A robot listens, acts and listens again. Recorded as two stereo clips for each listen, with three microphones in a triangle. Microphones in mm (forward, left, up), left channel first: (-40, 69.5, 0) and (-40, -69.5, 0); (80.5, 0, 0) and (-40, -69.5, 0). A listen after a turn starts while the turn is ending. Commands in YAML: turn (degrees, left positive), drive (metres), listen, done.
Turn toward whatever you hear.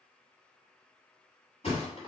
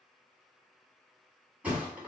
turn: 130
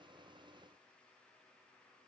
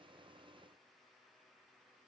done: "I heard a thud from this way, but can't make it out now."